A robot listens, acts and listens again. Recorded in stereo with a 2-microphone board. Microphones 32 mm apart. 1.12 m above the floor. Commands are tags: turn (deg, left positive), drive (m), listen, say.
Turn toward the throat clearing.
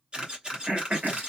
<turn deg="-40"/>
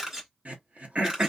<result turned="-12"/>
<turn deg="-125"/>
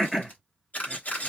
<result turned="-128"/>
<say>Facing the throat clearing.</say>